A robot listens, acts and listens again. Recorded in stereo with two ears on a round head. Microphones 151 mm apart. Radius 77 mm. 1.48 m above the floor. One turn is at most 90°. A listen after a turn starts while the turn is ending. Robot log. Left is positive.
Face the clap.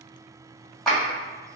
cmd yaw +30
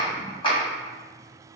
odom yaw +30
note: So it is at 150° left.
cmd yaw +90
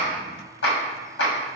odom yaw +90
note: The clap is now 100° left.
cmd yaw +90
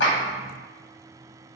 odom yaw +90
note: The clap is now 15° left.
cmd yaw +15
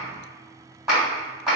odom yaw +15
end: Facing the clap, 1 to 2 m away.